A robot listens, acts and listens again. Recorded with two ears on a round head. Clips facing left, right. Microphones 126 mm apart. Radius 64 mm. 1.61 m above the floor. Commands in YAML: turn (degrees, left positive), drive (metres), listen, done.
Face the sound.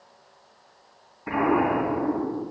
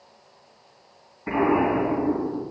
turn: -30
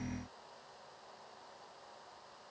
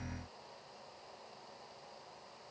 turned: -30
listen: true
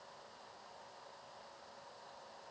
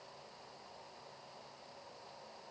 done: "I heard an explosion, but can't make it out now. It was about 25° left or 145° right."